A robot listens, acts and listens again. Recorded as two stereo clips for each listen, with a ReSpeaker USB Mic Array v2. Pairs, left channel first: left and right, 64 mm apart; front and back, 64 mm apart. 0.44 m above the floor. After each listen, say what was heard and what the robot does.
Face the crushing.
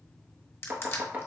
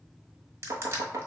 The crushing: 140° left. Turn 140° left.
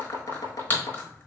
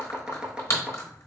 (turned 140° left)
The crushing is now 35° left. Turn 35° left.
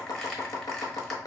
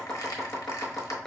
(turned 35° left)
Keep listening.
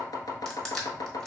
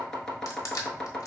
The crushing is now 10° left. Turn 10° left.
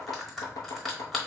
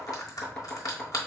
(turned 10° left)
Facing the crushing, 1 to 2 m away.